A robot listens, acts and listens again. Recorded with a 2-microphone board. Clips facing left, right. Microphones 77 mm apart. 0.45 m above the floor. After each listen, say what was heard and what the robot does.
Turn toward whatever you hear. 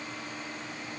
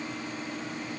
Keep listening.
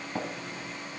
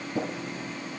The tapping: about 70° left or 110° left. Turn 70° left.
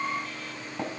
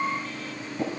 So it is at 40° left. Turn 40° left.
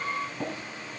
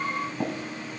The tapping is now 25° right. Turn 25° right.
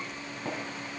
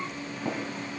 The tapping is now 15° right. Turn 15° right.
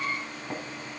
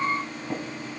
Facing the tapping, 2 to 4 m away.